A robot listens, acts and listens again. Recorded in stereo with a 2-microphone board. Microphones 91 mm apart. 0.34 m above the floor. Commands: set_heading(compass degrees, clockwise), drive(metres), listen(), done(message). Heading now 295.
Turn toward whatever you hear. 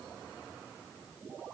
listen()
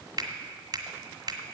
set_heading(345)
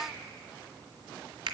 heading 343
set_heading(63)
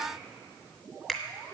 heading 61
done("Found it: a finger snap, straight ahead.")